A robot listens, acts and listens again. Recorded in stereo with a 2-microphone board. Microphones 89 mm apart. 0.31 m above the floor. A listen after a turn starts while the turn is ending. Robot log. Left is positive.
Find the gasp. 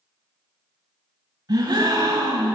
note: The gasp: about 50° right or 130° right.
cmd yaw -50
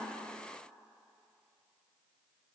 cmd idle
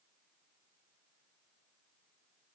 end: I heard a gasp, but can't make it out now. It was about straight ahead or 80° right.